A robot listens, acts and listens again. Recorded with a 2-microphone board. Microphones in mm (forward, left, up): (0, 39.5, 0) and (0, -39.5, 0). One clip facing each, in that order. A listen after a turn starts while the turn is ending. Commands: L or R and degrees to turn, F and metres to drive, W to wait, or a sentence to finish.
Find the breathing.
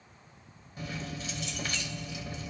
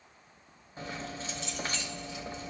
W
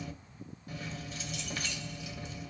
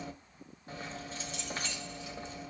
W
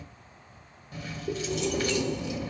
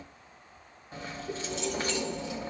L50
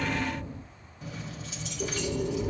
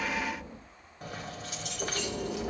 Facing the breathing, 2 to 4 m away.